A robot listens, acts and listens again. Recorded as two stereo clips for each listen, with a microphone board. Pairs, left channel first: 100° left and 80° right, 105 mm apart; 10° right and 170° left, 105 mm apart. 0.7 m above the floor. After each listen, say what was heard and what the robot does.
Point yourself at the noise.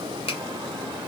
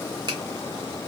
The finger snap: 125° left. Turn 125° left.
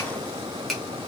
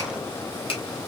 The finger snap is now 15° left. Turn 15° left.
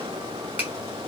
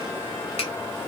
Keep listening.
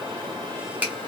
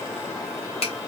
Facing the finger snap, 1 to 2 m away.